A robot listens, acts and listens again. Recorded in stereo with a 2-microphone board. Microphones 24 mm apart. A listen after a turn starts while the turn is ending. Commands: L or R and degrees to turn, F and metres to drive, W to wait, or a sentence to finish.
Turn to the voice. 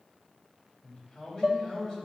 L30
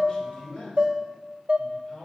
L115
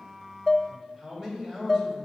R20
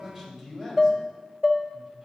R10
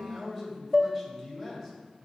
Found it: a man speaking, straight ahead, 2 to 4 m away.